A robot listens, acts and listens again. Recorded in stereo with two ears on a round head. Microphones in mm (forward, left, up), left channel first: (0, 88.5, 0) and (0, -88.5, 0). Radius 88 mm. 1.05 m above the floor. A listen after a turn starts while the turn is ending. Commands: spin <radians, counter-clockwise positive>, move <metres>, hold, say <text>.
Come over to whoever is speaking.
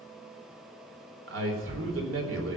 spin -1.22
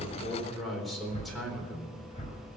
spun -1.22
move 1.0
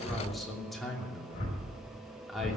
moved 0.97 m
move 1.0
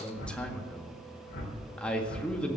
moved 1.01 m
move 1.0
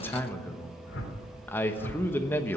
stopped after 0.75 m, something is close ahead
spin 0.26
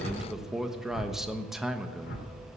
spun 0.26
say I am next to the man speaking.